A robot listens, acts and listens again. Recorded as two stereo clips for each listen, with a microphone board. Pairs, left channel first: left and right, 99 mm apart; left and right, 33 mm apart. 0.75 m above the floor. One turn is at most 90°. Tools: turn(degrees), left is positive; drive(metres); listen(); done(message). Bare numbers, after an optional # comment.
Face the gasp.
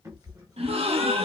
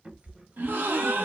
# The gasp: about 75° right or 105° right.
turn(-75)
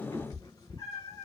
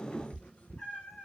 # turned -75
listen()
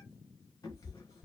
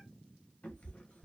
done("I heard a gasp, but can't make it out now. It was about straight ahead or 30° right.")